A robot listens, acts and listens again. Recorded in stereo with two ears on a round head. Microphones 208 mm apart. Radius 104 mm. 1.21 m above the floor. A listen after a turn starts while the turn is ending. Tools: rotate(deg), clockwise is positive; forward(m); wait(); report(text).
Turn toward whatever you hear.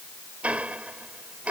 rotate(30)
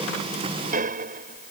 rotate(140)
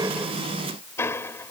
rotate(-10)
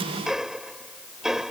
report("Found it: ticking, straight ahead.")